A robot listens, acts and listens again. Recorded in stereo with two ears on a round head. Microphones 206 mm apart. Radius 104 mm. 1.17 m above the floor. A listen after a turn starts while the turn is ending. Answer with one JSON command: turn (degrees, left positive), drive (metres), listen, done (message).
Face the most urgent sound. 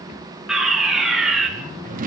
{"turn": 30}
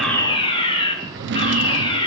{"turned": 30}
{"turn": 155}
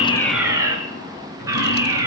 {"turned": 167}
{"turn": -15}
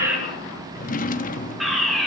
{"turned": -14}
{"done": "Facing the fire alarm, over 4 m away."}